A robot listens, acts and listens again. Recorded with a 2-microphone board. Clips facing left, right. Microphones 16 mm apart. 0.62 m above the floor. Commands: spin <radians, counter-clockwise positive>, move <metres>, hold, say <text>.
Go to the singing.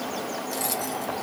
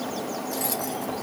hold
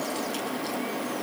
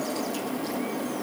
hold
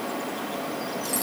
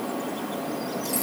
say I can't make out singing to turn to.